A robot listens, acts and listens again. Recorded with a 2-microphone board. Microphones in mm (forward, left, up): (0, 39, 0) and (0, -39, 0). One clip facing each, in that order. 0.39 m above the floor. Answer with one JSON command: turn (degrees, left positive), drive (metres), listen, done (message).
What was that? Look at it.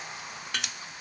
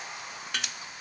{"turn": 30}
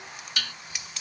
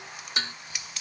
{"turn": -30}
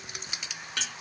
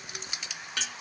{"done": "Facing the dishes clattering."}